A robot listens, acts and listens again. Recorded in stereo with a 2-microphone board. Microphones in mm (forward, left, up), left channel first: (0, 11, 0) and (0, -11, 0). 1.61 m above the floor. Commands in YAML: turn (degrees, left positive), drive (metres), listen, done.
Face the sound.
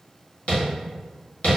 turn: 70
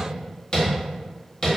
turn: 40
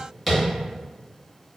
done: "Facing the tapping."